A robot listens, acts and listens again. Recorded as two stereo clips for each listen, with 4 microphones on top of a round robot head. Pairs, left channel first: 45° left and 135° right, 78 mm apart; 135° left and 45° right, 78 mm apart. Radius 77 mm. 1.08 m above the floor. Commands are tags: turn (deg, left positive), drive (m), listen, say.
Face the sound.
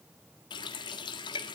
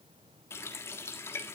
<turn deg="75"/>
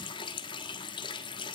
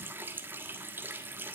<turn deg="20"/>
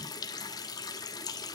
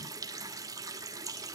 <say>Facing the running tap.</say>